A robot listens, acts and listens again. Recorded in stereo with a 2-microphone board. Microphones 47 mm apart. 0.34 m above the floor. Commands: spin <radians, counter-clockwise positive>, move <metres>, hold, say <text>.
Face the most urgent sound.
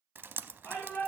spin 0.96
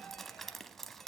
hold
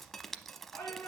spin 1.13
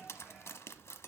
hold
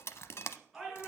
say Found it: a shout, straight ahead, over 4 m away.